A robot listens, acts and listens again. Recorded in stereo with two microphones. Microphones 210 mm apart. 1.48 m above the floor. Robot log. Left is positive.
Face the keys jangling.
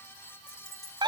cmd yaw +90
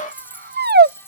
note: So it is at 10° left.
cmd yaw +10
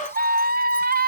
cmd idle
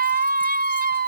cmd idle
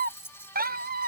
note: The keys jangling is now 10° left.
cmd yaw +10
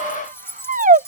note: The keys jangling is now 10° left.
cmd yaw +10
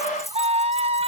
end: Facing the keys jangling.